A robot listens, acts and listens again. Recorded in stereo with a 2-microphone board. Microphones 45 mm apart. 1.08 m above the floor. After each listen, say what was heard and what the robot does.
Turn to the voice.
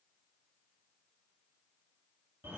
Keep listening.
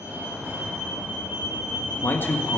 The man speaking: about 45° left or 135° left. Turn 45° left.
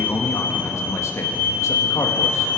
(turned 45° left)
So it is at 90° left. Turn 90° left.
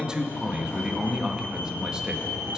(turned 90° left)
The man speaking is now 15° right. Turn 15° right.
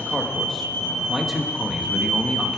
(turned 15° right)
Found it: a man speaking, straight ahead, 1 to 2 m away.